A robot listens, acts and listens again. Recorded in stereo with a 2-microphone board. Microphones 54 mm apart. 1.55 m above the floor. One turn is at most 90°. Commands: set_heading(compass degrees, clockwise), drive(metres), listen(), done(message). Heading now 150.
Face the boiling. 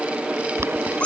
set_heading(205)
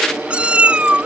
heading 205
listen()
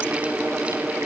listen()
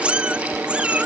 done("I heard boiling, but can't make it out now. It was about straight ahead or 70° right.")